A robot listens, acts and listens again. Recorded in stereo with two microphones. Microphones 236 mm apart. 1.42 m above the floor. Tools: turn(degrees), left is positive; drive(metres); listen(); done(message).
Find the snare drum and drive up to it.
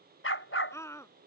listen()
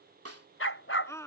turn(degrees=-90)
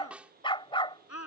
drive(metres=1.0)
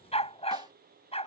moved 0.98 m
listen()
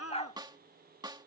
turn(degrees=-20)
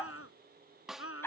drive(metres=1.0)
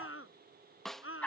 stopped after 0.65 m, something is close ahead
done("Arrived at the snare drum, straight ahead.")